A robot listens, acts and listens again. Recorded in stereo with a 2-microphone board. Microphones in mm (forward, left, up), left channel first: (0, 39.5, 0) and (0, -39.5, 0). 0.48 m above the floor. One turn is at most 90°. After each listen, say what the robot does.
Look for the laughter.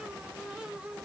Keep listening.
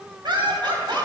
Turn 70° right.
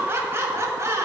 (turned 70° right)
Turn 35° right.
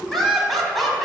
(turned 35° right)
Found it: laughter, straight ahead, 2 to 4 m away.